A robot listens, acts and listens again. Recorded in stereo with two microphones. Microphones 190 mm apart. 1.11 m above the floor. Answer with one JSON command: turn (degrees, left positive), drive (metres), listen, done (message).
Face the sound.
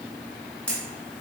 {"turn": 30}
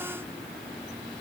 {"listen": true}
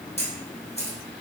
{"turn": 145}
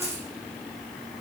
{"turn": 35}
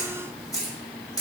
{"turn": 20}
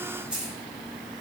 {"done": "Found it: a camera shutter, straight ahead."}